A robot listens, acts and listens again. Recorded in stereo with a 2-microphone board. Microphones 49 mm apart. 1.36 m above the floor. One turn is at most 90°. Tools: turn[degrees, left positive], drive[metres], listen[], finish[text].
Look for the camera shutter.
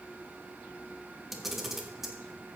Action: turn[-30]
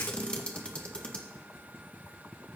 Thought: So it is at 25° left.
Action: turn[25]
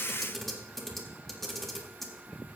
Action: finish[Found it: a camera shutter, straight ahead.]